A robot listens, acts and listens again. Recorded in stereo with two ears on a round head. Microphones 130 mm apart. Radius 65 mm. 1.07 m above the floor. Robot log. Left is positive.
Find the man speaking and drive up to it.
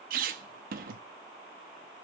cmd idle
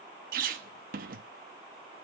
cmd idle
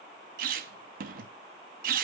end: I can't make out a man speaking to turn to.